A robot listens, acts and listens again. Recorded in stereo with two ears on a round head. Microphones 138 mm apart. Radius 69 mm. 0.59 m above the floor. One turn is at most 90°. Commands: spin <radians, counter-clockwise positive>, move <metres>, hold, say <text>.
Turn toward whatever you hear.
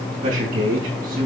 spin -1.05
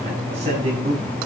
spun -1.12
spin -0.70
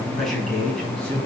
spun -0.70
spin 0.17
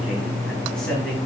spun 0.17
say Facing the man speaking.